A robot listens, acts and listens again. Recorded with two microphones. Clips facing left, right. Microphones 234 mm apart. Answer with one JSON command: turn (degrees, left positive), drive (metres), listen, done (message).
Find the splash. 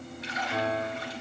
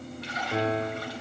{"turn": -65}
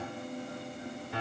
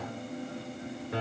{"listen": true}
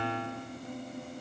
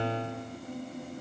{"done": "I heard a splash, but can't make it out now. It was about straight ahead or 50° right."}